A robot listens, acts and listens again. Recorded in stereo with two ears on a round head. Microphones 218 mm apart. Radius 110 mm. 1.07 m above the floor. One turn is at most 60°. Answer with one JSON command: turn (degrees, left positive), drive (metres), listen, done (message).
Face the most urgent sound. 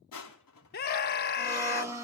{"turn": 40}
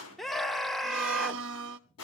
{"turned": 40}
{"done": "Facing the scream, 1 to 2 m away."}